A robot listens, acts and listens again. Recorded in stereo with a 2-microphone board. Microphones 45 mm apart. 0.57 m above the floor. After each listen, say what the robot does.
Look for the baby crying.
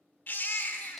Turn 50° left.
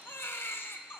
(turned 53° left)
Turn 75° left.
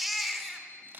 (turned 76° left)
Found it: a baby crying, straight ahead, 1 to 2 m away.